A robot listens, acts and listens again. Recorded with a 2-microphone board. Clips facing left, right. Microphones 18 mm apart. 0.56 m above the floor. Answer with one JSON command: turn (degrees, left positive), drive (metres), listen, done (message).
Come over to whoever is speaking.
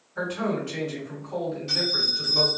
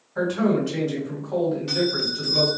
{"turn": -50}
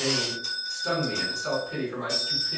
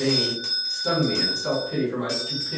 {"turn": -10}
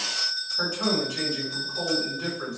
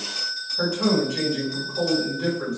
{"drive": 1.0}
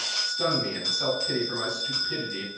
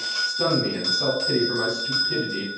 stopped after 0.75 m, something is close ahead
{"done": "I am next to the man speaking."}